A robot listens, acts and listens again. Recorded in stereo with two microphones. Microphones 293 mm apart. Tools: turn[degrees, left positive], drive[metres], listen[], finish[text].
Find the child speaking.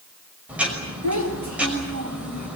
Thought: The child speaking: about 70° right or 110° right.
Action: turn[-70]
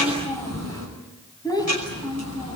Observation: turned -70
Thought: So it is at 15° left.
Action: turn[15]
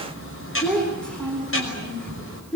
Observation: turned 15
Action: finish[Found it: a child speaking, straight ahead, over 4 m away.]